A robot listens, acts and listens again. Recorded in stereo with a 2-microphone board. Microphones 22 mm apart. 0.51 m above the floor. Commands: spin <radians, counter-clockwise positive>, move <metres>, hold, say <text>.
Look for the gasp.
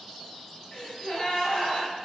spin 0.96
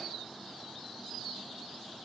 hold
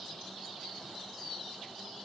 say I heard a gasp, but can't make it out now. It was about straight ahead or 70° left.